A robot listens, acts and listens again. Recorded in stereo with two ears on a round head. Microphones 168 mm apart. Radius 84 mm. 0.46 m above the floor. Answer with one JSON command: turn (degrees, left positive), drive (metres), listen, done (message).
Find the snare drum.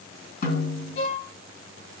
{"turn": 50}
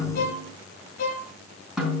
{"done": "Facing the snare drum, 2 to 4 m away."}